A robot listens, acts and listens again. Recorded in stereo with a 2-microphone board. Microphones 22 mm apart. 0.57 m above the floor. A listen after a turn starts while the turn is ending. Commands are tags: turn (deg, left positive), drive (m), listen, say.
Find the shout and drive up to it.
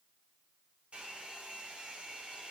<listen/>
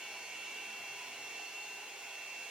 <listen/>
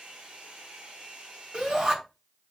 <turn deg="-45"/>
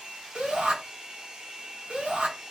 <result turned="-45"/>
<turn deg="-85"/>
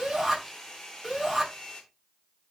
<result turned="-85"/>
<turn deg="-15"/>
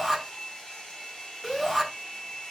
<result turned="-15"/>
<drive m="1.0"/>
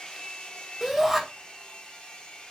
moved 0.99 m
<drive m="1.0"/>
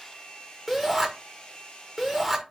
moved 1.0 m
<drive m="1.0"/>
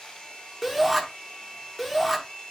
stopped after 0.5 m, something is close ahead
<say>Arrived at the shout, straight ahead.</say>